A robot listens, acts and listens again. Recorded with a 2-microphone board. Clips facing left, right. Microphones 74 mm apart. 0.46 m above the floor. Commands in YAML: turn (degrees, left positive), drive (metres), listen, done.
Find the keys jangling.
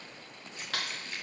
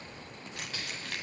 turn: -70
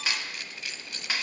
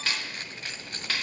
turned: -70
turn: -40
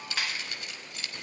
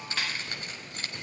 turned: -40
turn: -40
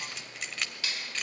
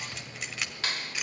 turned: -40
turn: -10
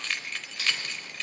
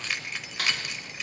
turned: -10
turn: -10
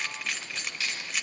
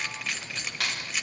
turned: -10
done: "Found it: keys jangling, straight ahead, 1 to 2 m away."